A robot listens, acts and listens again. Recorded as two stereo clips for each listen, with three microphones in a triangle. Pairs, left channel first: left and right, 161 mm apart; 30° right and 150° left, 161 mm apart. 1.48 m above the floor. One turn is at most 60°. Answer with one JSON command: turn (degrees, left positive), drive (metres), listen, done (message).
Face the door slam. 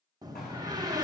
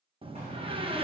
{"turn": -60}
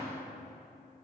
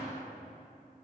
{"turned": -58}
{"turn": -60}
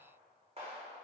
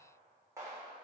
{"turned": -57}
{"turn": -40}
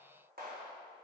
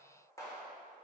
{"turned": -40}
{"done": "I heard a door slam from this way, but can't make it out now."}